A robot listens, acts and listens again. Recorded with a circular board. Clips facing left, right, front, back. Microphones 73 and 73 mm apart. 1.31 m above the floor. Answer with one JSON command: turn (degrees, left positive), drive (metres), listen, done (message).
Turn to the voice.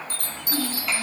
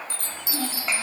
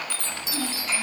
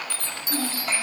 {"turn": -155}
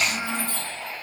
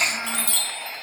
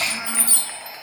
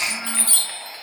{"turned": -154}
{"done": "Facing the child speaking, over 4 m away."}